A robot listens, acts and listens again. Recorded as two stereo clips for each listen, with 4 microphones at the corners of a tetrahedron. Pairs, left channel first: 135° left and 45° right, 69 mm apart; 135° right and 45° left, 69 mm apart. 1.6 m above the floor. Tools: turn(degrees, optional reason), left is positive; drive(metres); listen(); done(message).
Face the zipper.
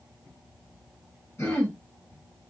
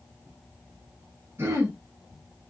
listen()
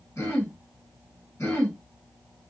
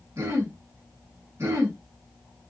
listen()
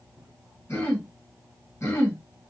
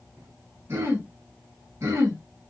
done("I can't make out a zipper, only throat clearing.")